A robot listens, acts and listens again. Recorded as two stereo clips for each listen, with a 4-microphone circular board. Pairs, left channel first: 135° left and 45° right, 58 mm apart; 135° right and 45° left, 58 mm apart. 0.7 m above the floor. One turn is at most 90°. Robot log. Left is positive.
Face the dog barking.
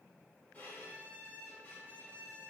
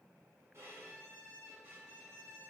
cmd idle
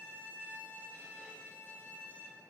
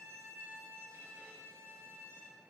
cmd idle
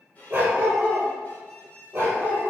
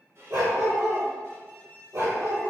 note: The dog barking: 15° left.
cmd yaw +15
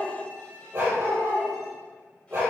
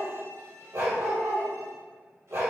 end: Facing the dog barking.